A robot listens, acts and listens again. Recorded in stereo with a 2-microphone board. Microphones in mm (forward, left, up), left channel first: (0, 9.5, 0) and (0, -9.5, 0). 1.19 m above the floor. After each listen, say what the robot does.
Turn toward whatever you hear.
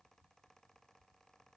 Keep listening.
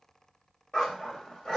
Turn 50° left.
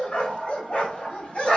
Turn 80° left.
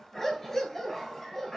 Turn 20° left.
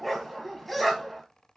Found it: a dog barking, straight ahead, 2 to 4 m away.